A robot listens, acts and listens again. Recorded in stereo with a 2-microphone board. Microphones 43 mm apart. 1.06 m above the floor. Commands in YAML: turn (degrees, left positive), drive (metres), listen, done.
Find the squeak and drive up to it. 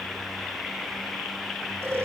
listen: true
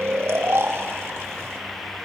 listen: true
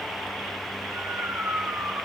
done: "I can't make out a squeak to turn to."